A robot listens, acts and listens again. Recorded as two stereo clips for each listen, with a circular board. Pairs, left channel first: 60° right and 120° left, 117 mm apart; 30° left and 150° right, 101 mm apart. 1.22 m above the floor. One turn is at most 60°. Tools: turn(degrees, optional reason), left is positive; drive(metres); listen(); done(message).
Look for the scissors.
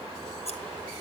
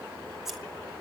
turn(degrees=-60, reason="The scissors: 60° right.")
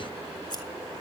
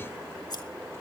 turn(degrees=-10, reason="The scissors is now 10° right.")
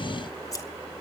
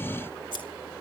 done("Facing the scissors.")